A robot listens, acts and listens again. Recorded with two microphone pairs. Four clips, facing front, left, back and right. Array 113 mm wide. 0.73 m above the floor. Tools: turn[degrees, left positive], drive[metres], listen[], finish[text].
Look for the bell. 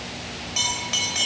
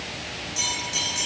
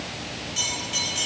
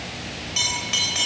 Thought: The bell: 25° right.
Action: turn[-25]
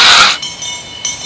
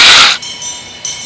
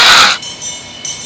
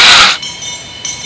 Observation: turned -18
Action: finish[Facing the bell, 2 to 4 m away.]